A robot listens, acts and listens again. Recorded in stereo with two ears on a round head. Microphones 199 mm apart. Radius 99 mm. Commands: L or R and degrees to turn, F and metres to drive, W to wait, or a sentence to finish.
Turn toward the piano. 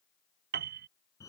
R50
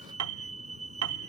R80
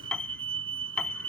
Found it: a piano, straight ahead.